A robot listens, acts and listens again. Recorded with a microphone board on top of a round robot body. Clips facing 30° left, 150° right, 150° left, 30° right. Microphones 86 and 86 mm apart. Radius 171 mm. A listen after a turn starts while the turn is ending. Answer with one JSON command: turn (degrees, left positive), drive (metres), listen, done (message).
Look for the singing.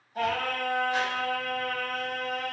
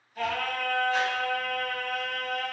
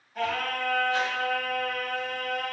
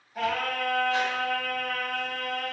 {"turn": 80}
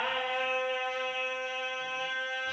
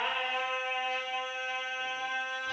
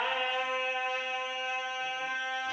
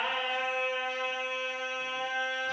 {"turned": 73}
{"turn": 30}
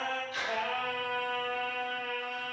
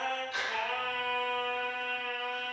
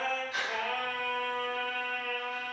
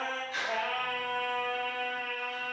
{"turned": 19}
{"turn": 25}
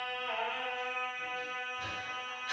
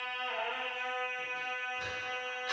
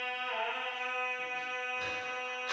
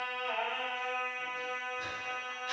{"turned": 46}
{"turn": -25}
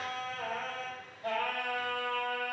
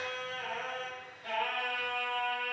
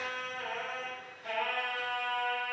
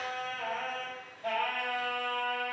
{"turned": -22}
{"done": "Facing the singing, 2 to 4 m away."}